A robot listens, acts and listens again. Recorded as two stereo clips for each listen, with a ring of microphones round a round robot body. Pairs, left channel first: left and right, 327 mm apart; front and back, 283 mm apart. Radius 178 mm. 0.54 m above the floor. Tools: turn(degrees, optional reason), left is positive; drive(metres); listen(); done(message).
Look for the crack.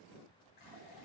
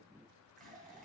listen()
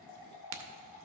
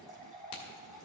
turn(degrees=-75, reason="The crack: 75° right.")
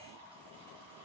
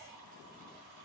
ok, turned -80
done("I heard a crack from this way, but can't make it out now.")